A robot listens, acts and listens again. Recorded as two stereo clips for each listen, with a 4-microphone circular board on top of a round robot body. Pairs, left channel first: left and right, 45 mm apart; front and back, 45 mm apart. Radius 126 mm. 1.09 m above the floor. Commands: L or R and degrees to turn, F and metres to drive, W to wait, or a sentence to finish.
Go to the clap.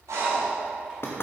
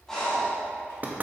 W
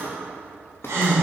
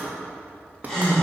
W
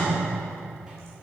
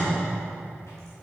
I can't make out a clap to turn to.